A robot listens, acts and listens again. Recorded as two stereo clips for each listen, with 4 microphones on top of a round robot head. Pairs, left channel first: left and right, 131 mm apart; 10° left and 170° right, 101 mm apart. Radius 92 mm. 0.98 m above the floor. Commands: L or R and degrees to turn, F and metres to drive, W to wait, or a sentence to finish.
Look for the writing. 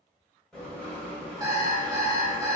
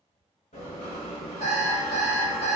Facing the writing.